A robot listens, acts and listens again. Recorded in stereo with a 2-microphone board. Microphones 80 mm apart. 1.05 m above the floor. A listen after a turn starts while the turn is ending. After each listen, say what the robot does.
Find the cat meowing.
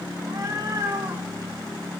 Turn 55° right.
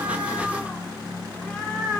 Turn 15° left.
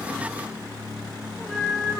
Facing the cat meowing, over 4 m away.